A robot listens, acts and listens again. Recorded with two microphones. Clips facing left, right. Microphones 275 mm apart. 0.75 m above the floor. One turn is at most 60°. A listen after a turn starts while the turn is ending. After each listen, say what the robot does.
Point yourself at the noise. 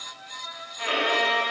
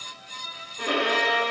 Turn 50° right.
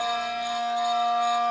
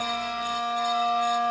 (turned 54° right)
Found it: a violin, straight ahead.